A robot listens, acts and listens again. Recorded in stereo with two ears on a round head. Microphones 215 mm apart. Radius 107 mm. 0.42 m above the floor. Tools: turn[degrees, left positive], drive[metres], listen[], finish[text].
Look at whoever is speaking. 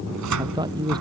Thought: The man speaking: about 20° right or 160° right.
Action: turn[-20]
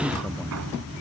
Action: listen[]
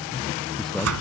Action: turn[30]
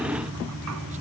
Action: listen[]
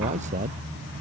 Thought: So it is at 30° right.
Action: turn[-30]
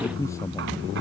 Thought: The man speaking is now 15° left.
Action: turn[15]
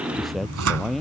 Action: finish[Facing the man speaking.]